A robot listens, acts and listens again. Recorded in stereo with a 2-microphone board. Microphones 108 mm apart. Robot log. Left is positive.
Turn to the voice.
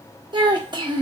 note: The child speaking: about 40° right or 140° right.
cmd yaw -40
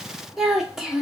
end: Facing the child speaking, under 1 m away.